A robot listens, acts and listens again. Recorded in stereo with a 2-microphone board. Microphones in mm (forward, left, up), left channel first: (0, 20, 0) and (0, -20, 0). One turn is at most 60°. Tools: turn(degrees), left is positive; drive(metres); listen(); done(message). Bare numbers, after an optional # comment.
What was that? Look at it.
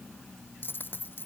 # The dropped coin: about 55° left or 125° left.
turn(55)
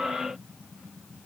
listen()
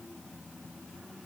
done("I heard a dropped coin, but can't make it out now. It was about straight ahead or 70° left.")